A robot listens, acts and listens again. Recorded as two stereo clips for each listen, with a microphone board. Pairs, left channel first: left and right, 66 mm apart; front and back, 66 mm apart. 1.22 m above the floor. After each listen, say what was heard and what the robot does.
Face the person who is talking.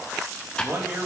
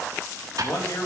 The man speaking: 35° right. Turn 35° right.
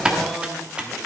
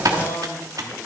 Found it: a man speaking, straight ahead, 2 to 4 m away.